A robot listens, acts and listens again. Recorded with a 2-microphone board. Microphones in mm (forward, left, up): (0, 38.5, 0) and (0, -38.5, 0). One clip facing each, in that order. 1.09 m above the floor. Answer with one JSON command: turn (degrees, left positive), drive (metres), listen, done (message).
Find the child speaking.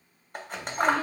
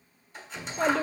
{"turn": -90}
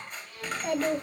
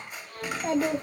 {"turn": -35}
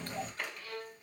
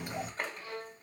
{"turn": -15}
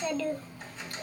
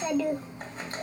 {"turn": -30}
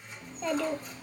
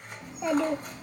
{"turn": -20}
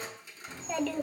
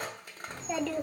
{"done": "Facing the child speaking, 1 to 2 m away."}